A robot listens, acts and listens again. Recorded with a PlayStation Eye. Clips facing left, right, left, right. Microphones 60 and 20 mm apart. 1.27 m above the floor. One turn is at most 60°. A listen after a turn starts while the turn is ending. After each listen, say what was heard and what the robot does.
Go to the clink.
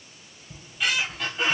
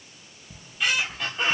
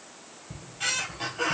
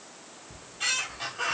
Keep listening.
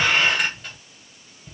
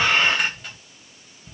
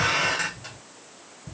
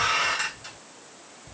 Keep listening.
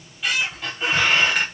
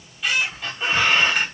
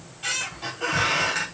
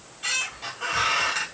I can't make out a clink to turn to.